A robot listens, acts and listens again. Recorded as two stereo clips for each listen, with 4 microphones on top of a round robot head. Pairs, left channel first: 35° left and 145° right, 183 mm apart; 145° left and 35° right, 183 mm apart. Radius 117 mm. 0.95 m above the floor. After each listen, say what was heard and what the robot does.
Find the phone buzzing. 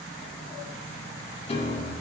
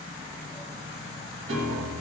Keep listening.
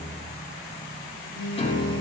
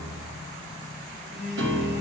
The phone buzzing: 120° right. Turn 120° right.
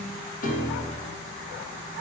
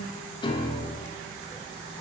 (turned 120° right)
Keep listening.
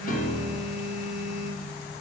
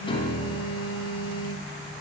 The phone buzzing is now 15° right. Turn 15° right.
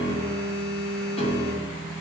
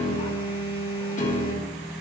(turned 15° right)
Found it: a phone buzzing, straight ahead, 2 to 4 m away.